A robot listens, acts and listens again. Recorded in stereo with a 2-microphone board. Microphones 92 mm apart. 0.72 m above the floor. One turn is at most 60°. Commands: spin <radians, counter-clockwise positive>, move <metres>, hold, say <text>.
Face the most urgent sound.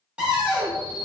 spin -0.87
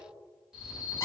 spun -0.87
say Facing the alarm, 1 to 2 m away.